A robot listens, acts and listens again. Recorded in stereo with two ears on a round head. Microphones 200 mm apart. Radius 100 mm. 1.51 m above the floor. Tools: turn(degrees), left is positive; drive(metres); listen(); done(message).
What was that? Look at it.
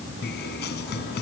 turn(degrees=50)
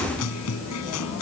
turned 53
turn(degrees=80)
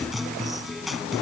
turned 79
done("Found it: a guitar, straight ahead.")